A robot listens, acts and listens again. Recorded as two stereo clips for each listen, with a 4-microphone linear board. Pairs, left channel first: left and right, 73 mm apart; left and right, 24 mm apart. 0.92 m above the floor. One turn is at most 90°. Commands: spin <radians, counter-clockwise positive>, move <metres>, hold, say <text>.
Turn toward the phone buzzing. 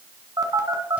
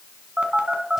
spin -0.96
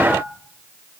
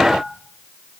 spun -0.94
hold
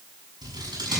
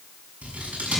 hold
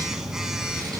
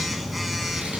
say Found it: a phone buzzing, straight ahead.